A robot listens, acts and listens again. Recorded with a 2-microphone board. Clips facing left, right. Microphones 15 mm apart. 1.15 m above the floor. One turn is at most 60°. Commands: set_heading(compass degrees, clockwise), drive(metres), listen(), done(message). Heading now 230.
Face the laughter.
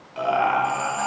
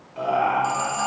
set_heading(205)
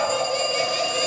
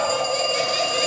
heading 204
set_heading(219)
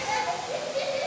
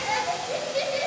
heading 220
set_heading(250)
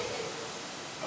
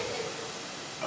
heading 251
set_heading(281)
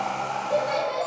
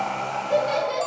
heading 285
set_heading(300)
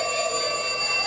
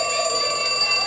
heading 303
listen()
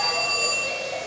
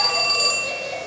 done("Found it: laughter, straight ahead, 2 to 4 m away.")